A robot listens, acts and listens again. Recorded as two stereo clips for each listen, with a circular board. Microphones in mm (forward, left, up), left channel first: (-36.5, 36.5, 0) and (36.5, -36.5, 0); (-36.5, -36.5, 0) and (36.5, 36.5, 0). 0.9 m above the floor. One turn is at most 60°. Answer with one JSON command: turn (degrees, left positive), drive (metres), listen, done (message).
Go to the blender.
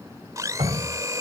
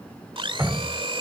{"turn": 10}
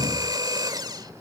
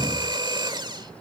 {"drive": 1.0}
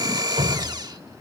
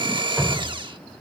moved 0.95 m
{"drive": 1.0}
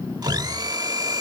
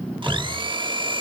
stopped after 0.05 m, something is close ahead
{"done": "Arrived at the blender, straight ahead."}